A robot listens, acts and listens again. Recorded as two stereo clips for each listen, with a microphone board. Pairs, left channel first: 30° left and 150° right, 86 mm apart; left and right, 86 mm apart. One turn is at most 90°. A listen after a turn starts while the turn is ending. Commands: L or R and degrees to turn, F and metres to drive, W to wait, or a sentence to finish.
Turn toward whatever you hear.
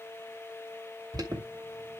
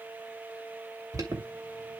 R90
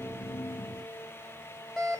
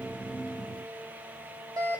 R60
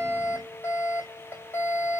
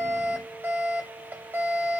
R30
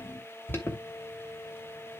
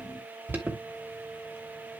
R30
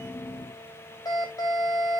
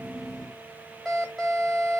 Found it: an alarm, straight ahead.